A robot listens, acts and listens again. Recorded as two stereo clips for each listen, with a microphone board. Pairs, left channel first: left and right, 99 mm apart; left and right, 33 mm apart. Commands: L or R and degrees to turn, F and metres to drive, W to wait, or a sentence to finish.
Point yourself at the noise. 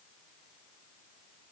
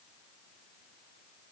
W
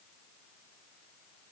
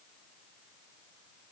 W
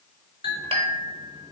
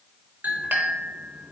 R70
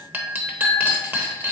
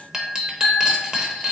R20
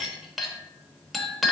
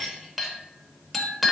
Facing the clink.